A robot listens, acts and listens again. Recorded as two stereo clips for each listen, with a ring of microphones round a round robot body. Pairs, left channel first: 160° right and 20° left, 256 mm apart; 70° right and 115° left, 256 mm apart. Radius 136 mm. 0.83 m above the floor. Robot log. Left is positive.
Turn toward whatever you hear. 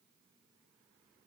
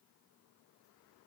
cmd idle
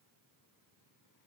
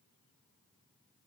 cmd idle
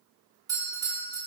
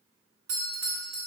note: The doorbell: 100° left.
cmd yaw +100
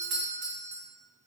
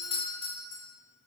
end: Facing the doorbell, 2 to 4 m away.